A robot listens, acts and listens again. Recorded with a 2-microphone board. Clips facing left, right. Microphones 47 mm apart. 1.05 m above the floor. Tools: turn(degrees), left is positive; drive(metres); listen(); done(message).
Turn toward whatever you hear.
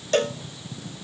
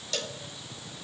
turn(degrees=40)
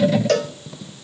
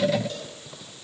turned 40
turn(degrees=100)
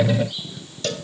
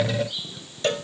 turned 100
turn(degrees=-25)
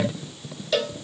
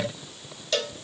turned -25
done("Facing the cowbell.")